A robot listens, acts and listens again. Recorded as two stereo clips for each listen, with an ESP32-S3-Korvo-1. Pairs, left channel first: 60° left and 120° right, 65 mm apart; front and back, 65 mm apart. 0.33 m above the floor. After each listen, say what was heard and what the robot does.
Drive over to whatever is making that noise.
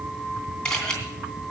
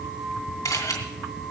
The camera shutter: 20° right. Turn 20° right.
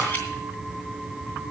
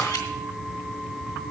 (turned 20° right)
Keep listening.
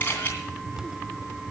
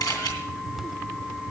Drive 1.0 m forward.
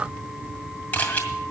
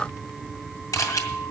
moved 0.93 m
Drive 1.0 m forward.
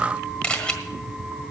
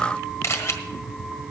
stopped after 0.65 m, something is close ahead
The camera shutter is now 10° right. Turn 10° right.
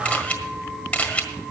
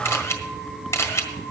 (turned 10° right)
Arrived at the camera shutter, straight ahead.